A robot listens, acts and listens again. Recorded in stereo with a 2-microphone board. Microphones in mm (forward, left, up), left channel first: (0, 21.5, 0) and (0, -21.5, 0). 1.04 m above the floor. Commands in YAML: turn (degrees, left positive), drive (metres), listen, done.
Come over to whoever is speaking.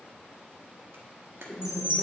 turn: -30
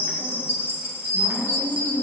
drive: 1.0
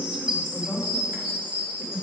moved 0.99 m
drive: 1.0
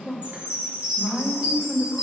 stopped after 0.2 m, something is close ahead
done: "I am next to the woman speaking."